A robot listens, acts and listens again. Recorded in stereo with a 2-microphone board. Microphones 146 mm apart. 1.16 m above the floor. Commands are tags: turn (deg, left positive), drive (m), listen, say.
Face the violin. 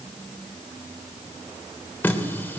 <listen/>
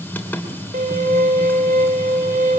<turn deg="-90"/>
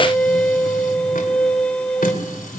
<turn deg="10"/>
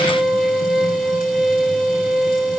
<say>Facing the violin, 1 to 2 m away.</say>